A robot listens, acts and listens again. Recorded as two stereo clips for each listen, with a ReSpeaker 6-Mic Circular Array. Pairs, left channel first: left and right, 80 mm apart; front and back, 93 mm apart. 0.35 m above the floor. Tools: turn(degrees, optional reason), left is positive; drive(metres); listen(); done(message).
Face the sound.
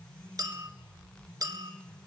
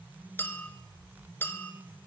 turn(degrees=-60, reason="The clink: 60° right.")
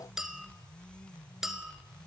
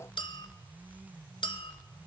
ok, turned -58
done("Facing the clink.")